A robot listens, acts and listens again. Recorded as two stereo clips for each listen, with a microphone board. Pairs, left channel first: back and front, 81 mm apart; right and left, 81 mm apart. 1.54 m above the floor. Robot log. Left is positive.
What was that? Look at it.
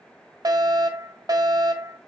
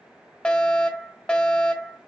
note: The fire alarm: 15° right.
cmd yaw -15
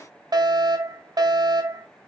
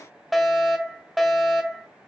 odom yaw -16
end: Found it: a fire alarm, straight ahead.